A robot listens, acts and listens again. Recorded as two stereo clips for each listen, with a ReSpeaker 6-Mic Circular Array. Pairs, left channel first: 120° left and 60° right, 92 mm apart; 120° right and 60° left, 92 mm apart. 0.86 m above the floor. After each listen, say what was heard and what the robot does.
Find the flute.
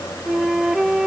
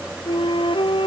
The flute: 145° right. Turn 145° right.
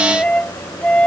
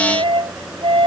The flute is now 45° left. Turn 45° left.
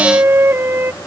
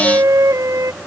Found it: a flute, straight ahead.